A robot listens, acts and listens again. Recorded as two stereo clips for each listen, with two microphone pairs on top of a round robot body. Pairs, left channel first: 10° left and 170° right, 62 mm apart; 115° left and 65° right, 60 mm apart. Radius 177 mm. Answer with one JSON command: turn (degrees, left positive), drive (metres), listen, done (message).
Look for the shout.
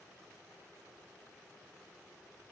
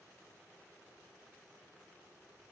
{"listen": true}
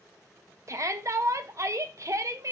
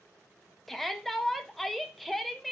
{"turn": -155}
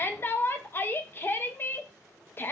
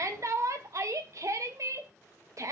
{"turn": -45}
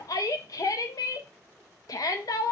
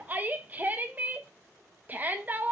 {"turn": -10}
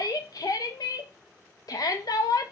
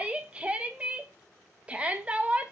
{"done": "Found it: a shout, straight ahead."}